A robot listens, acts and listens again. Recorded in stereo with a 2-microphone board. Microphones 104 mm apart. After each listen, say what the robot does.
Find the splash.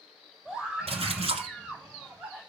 Turn 90° right.
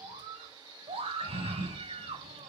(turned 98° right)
Turn 10° left.
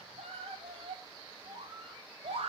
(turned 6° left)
I heard a splash from this way, but can't make it out now.